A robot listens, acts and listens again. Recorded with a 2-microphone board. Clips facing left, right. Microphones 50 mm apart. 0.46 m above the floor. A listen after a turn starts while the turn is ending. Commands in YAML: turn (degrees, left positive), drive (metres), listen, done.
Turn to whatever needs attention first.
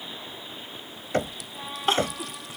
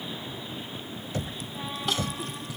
turn: 35
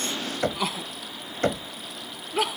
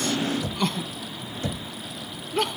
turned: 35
done: "Found it: crying, straight ahead."